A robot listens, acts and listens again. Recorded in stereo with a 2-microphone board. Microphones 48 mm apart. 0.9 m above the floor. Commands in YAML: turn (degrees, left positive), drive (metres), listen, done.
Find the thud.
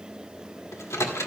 listen: true
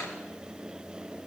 listen: true
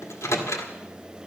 done: "I can't make out a thud to turn to."